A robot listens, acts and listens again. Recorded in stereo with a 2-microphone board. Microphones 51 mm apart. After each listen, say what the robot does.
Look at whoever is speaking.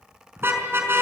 Keep listening.
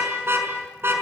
Keep listening.
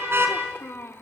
Turn 55° left.
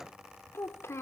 Turn 70° left.
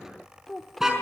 Found it: a child speaking, straight ahead, 1 to 2 m away.